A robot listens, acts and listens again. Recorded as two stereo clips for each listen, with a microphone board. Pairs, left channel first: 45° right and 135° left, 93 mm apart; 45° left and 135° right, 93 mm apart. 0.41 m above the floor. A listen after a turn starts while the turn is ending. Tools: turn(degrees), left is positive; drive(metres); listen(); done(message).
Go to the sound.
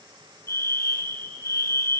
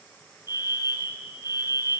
turn(degrees=10)
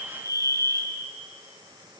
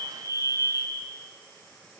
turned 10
drive(metres=1.0)
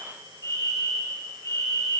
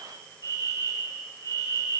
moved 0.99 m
drive(metres=1.0)
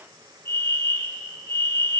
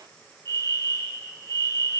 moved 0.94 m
drive(metres=1.0)
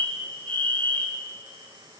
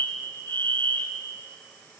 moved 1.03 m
turn(degrees=10)
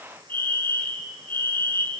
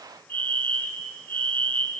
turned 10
drive(metres=1.0)
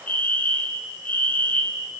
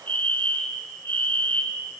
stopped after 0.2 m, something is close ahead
done("I am next to the fire alarm.")